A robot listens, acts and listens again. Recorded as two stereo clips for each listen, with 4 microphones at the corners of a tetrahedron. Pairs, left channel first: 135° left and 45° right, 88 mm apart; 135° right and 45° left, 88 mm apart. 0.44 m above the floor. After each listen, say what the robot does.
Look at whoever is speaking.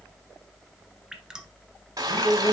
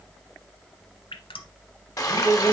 Turn 170° left.
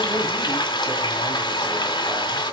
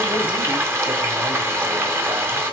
Keep listening.
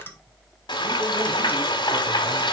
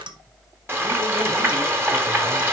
Keep listening.
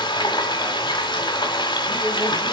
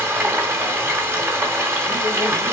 I heard a man speaking from this way, but can't make it out now.